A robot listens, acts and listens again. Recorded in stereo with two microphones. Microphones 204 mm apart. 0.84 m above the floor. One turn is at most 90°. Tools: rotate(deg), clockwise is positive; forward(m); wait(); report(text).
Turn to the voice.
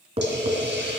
wait()
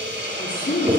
rotate(-70)
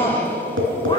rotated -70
rotate(-25)
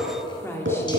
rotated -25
rotate(-15)
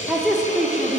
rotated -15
report("Found it: a woman speaking, straight ahead, 2 to 4 m away.")